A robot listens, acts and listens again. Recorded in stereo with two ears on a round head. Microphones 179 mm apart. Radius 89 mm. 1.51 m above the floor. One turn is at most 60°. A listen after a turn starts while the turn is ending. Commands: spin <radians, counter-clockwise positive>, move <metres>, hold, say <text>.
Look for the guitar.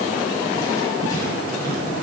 hold
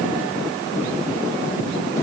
hold
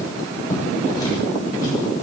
say I can't make out a guitar, only writing.